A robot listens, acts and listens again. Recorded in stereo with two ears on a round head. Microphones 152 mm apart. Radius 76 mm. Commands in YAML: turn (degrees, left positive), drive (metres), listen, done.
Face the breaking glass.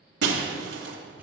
turn: -90
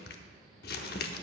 done: "I heard breaking glass from this way, but can't make it out now."